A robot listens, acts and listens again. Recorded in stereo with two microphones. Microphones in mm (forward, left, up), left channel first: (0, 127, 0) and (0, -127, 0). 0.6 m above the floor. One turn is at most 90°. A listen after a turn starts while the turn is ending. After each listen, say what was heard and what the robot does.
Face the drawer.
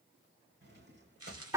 The drawer: about 40° right or 140° right. Turn 40° right.
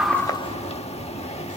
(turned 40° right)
Keep listening.
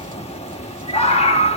Keep listening.
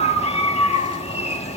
I heard a drawer, but can't make it out now. It was about straight ahead or 100° right.